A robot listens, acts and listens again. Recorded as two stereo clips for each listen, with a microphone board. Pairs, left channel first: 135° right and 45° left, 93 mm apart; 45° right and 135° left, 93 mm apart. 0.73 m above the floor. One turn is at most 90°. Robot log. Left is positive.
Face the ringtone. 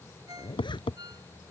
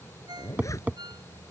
note: The ringtone: 90° left.
cmd yaw +90
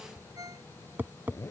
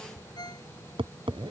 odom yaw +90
end: Found it: a ringtone, straight ahead.